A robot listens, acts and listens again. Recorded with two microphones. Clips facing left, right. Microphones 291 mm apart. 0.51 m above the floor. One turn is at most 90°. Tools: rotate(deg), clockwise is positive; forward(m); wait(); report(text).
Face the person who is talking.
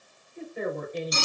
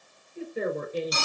rotate(45)
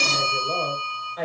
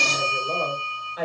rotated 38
rotate(10)
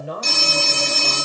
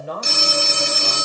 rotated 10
report("Facing the woman speaking.")